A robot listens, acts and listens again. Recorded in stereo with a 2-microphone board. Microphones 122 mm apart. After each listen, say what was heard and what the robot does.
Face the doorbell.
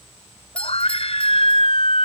Turn 30° left.
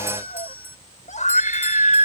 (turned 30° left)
Keep listening.
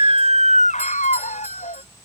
Keep listening.
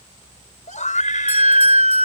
I heard a doorbell, but can't make it out now. It was about 20° right or 140° left.